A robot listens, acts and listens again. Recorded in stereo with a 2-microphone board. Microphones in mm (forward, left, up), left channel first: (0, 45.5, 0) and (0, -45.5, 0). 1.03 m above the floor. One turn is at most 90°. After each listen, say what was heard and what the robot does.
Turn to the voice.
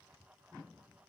Keep listening.
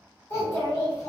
The child speaking: about 30° left or 150° left. Turn 30° left.
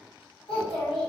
So it is at 120° left. Turn 90° left.
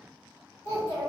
The child speaking is now 40° left. Turn 40° left.
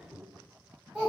Found it: a child speaking, straight ahead, 1 to 2 m away.